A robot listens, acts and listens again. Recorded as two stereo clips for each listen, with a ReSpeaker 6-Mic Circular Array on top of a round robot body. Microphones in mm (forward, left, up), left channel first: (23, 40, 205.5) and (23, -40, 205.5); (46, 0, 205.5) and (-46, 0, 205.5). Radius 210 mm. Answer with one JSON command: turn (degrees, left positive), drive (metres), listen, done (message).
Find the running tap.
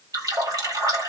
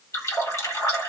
{"turn": -55}
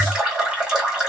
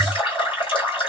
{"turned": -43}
{"turn": -10}
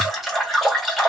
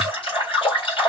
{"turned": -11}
{"done": "Facing the running tap, 1 to 2 m away."}